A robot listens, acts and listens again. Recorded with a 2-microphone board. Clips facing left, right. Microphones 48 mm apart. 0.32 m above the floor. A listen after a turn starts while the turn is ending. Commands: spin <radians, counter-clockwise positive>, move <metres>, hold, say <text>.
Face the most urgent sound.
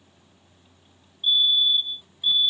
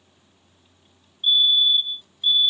spin -0.52
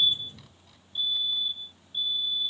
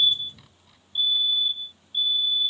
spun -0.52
spin -2.09
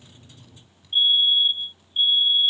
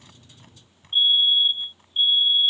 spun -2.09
say Facing the fire alarm.